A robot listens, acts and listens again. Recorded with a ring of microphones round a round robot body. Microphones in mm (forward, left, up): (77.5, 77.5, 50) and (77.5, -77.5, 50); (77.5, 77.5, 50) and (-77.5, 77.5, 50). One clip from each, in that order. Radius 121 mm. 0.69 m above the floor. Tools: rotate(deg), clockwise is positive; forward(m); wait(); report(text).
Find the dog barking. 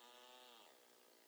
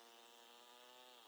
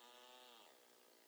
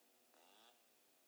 wait()
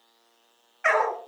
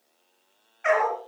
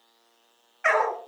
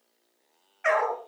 rotate(-55)
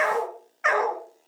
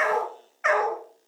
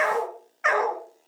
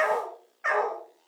rotate(-15)
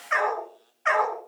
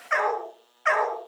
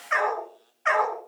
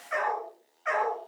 rotate(10)
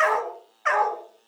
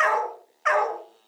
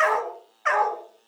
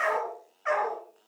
rotate(10)
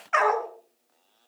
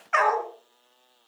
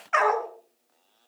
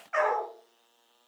report("Found it: a dog barking, straight ahead, 2 to 4 m away.")